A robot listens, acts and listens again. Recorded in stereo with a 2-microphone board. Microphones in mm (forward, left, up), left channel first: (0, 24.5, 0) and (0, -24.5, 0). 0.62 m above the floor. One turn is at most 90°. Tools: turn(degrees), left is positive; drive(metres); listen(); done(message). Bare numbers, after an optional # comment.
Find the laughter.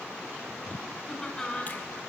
turn(30)
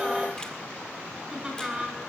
# So it is at 15° right.
turn(-15)
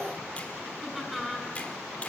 done("Facing the laughter, over 4 m away.")